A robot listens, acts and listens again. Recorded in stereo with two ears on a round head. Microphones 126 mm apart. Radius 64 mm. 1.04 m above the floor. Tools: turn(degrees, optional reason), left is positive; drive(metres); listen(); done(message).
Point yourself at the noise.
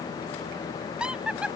turn(degrees=-30)
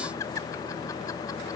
turn(degrees=20, reason="So it is at 20° left.")
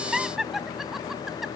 done("Facing the laughter.")